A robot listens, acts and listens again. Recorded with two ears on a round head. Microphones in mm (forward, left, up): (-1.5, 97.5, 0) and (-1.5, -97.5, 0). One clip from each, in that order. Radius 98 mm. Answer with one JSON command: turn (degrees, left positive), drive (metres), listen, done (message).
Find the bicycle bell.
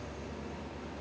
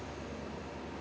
{"listen": true}
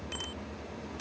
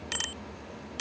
{"turn": -90}
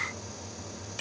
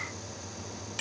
{"turn": -15}
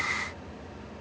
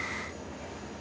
{"listen": true}
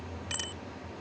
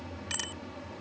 {"turn": -10}
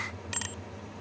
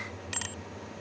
{"done": "Facing the bicycle bell."}